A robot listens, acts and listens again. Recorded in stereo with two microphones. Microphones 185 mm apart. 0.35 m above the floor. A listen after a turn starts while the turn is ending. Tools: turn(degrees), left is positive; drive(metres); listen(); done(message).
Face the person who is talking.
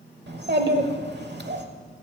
turn(degrees=-65)
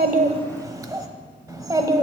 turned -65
turn(degrees=-20)
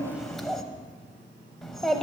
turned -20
done("Facing the child speaking, under 1 m away.")